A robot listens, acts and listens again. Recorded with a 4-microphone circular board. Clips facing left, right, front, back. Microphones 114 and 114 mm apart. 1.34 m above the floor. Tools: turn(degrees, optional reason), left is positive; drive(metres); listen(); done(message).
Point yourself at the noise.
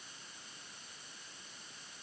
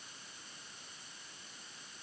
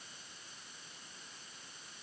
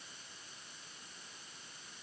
listen()
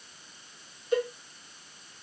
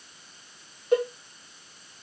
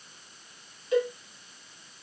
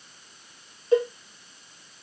turn(degrees=-125, reason="The cowbell: 125° right.")
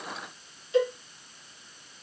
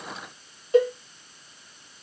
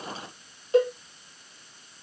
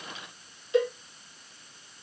turn(degrees=-50, reason="The cowbell is now 50° right.")
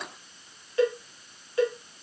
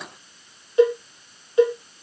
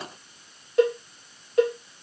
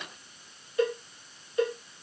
turn(degrees=-20, reason="The cowbell is now 20° right.")
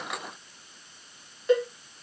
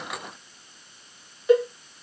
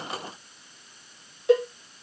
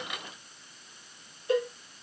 done("Found it: a cowbell, straight ahead.")